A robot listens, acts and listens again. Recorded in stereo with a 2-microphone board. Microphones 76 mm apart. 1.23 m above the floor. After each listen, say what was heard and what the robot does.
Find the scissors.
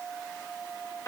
Keep listening.
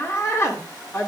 Keep listening.
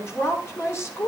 I can't make out scissors, only a woman speaking.